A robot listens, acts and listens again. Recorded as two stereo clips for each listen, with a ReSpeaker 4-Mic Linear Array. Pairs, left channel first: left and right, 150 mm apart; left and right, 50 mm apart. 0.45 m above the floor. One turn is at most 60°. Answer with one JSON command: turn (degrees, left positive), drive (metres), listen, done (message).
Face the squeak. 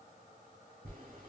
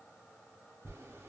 {"listen": true}
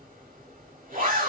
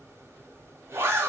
{"listen": true}
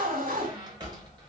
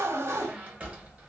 {"turn": -30}
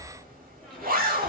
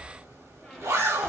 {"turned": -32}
{"done": "Found it: a squeak, straight ahead, 1 to 2 m away."}